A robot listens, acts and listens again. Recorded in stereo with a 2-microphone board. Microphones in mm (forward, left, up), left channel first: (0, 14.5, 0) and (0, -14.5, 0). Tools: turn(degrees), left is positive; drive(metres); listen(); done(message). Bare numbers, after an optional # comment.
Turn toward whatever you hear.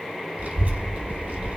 # The child speaking: about 70° right or 110° right.
turn(-70)
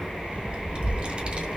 # So it is at 40° right.
turn(-40)
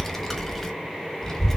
# The child speaking is now 10° left.
turn(10)
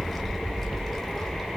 done("Facing the child speaking.")